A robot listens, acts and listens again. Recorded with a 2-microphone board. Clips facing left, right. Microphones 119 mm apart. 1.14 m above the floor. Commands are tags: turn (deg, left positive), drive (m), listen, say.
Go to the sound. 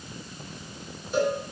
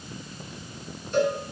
<turn deg="30"/>
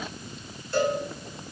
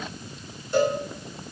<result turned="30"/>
<turn deg="-20"/>
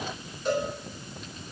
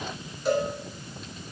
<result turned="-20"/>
<drive m="1.0"/>
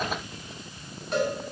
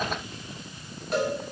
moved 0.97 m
<drive m="1.0"/>
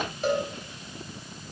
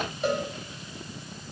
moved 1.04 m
<drive m="1.0"/>
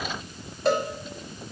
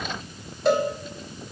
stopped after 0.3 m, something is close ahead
<say>Arrived at the cowbell, straight ahead.</say>